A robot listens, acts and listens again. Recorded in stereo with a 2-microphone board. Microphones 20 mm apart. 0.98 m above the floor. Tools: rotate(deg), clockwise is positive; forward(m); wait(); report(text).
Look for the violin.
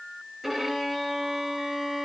rotate(30)
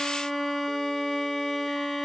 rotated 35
rotate(-25)
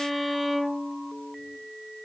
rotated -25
report("Found it: a violin, straight ahead, 2 to 4 m away.")